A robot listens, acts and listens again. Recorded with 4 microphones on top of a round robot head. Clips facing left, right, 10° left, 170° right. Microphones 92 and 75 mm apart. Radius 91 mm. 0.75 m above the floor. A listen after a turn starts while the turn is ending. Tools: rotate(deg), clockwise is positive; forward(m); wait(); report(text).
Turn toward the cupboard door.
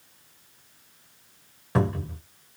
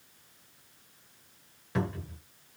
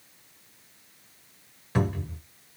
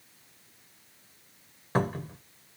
rotate(-145)
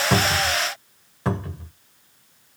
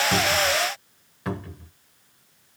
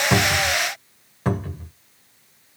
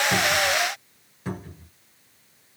rotate(-35)
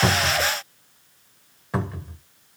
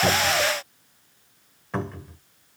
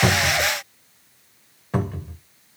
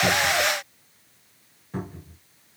rotate(-10)
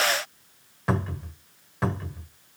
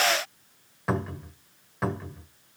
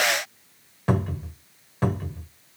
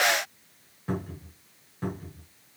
report("Found it: a cupboard door, straight ahead.")